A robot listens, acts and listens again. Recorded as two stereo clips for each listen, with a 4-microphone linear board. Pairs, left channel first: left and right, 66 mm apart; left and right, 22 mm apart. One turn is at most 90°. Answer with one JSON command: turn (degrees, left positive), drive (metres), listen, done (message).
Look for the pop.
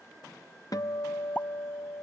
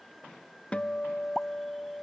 {"turn": 25}
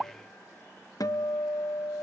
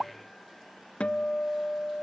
{"done": "Facing the pop."}